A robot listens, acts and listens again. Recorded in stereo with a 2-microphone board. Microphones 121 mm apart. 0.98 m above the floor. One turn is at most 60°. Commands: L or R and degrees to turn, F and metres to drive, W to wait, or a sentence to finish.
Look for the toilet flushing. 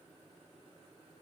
W
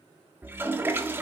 R20
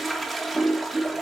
Found it: a toilet flushing, straight ahead.